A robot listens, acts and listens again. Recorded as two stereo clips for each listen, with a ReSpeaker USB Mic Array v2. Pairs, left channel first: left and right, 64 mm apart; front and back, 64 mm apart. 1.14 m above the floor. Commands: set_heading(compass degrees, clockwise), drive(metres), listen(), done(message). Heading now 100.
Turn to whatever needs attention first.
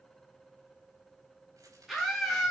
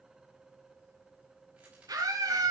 set_heading(275)
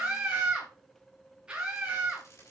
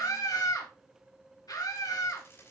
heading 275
set_heading(290)
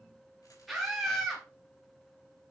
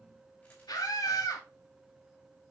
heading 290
done("Found it: a scream, straight ahead, 2 to 4 m away.")